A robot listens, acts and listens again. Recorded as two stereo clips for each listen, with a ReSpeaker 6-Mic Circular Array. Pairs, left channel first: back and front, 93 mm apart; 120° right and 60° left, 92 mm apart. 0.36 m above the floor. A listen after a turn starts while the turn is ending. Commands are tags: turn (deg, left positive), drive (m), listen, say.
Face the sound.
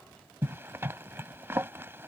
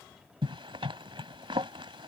<turn deg="60"/>
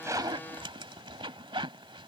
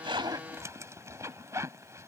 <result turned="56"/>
<say>Facing the zipper.</say>